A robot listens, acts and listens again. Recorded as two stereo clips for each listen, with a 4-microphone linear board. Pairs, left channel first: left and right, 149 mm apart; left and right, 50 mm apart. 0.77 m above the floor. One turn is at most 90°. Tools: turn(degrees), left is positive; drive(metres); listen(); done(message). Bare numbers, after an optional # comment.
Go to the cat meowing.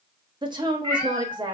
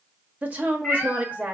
# The cat meowing: about 20° left or 160° left.
turn(20)
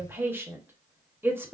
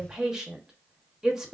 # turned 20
listen()
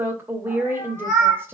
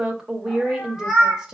drive(1.0)
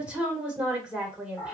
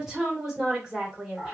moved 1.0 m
# The cat meowing is now 10° left.
turn(10)
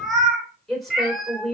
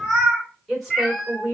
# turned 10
drive(1.0)
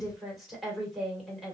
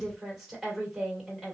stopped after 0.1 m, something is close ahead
listen()
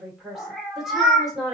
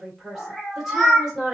done("I am next to the cat meowing.")